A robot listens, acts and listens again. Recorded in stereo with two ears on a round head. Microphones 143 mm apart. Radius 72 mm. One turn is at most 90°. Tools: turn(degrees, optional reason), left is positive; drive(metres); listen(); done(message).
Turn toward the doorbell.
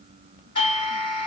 turn(degrees=35, reason="The doorbell: about 35° left or 145° left.")
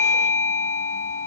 done("Facing the doorbell, 2 to 4 m away.")